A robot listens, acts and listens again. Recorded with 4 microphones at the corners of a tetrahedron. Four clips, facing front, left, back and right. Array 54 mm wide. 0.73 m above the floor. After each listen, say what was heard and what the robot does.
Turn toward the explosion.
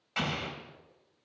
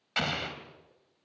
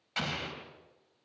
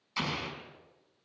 The explosion: 80° left. Turn 80° left.
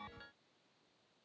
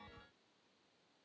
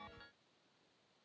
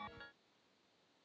I heard an explosion from this way, but can't make it out now.